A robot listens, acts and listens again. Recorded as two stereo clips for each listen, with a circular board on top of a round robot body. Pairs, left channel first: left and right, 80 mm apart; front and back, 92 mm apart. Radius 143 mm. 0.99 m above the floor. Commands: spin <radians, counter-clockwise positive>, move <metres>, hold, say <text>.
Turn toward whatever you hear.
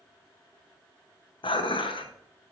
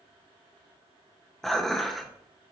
spin 1.48
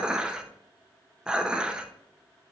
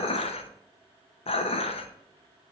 spin -0.17
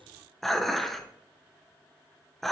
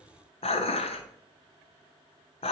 say Found it: dishes clattering, straight ahead.